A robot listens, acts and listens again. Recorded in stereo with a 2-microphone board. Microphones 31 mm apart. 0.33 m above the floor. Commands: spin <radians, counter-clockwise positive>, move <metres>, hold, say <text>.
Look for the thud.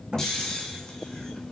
spin -0.61
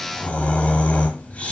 hold
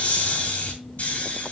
say I heard a thud, but can't make it out now. It was about straight ahead or 110° right.